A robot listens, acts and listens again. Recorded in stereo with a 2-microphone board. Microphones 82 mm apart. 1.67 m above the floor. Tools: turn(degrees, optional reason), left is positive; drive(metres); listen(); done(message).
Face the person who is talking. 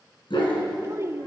turn(degrees=-35, reason="The child speaking: about 35° right or 145° right.")
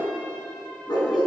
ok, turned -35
listen()
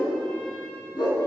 listen()
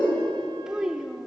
turn(degrees=-10, reason="So it is at 10° right.")
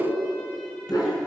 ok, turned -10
listen()
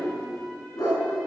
listen()
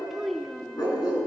done("Found it: a child speaking, straight ahead.")